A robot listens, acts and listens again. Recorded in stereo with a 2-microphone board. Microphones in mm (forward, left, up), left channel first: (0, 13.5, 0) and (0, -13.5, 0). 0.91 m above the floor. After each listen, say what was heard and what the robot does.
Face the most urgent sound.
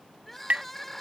Turn 30° left.
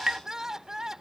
So it is at 20° right. Turn 20° right.
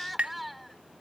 Facing the crying.